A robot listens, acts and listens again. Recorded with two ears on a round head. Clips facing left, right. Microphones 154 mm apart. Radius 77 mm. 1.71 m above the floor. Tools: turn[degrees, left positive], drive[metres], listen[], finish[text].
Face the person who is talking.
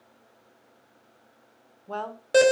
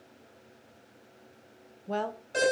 Thought: The woman speaking: about 15° right or 165° right.
Action: turn[-15]
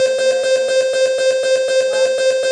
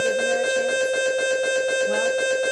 Action: listen[]
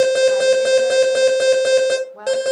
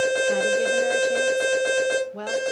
Thought: So it is at 145° right.
Action: turn[-145]
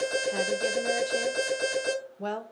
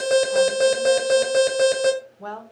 Thought: The woman speaking is now 25° left.
Action: turn[25]
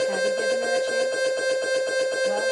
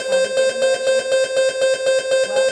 Action: listen[]
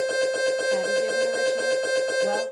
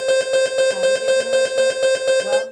Action: listen[]
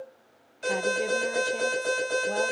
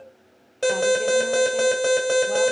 Action: finish[I heard a woman speaking from this way, but can't make it out now.]